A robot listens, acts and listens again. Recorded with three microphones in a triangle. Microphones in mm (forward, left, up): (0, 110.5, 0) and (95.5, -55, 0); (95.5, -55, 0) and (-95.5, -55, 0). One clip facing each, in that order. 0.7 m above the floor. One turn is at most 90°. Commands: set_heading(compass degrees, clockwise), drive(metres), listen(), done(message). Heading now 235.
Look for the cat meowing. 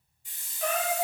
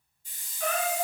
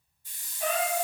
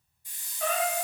set_heading(305)
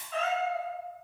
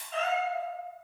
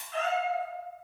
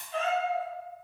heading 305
done("Facing the cat meowing.")